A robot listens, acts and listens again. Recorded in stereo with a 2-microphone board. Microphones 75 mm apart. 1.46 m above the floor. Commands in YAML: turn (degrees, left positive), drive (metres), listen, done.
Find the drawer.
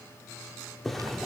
turn: 30
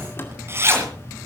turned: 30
listen: true
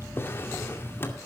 turn: 145
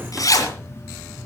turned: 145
listen: true
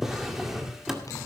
done: "Found it: a drawer, straight ahead, 2 to 4 m away."